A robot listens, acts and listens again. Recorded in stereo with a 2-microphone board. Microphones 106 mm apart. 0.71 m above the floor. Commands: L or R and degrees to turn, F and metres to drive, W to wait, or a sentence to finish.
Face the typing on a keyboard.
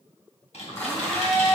L90
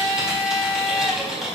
Facing the typing on a keyboard.